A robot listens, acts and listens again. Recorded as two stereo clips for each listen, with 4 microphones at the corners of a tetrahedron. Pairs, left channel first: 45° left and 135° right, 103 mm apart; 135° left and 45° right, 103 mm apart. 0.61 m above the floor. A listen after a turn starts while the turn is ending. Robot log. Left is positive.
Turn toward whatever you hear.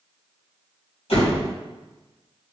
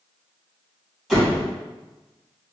note: The door slam: 45° left.
cmd yaw +45
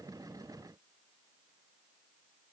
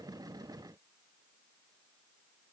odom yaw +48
end: Facing where the door slam came from. I can't hear it now.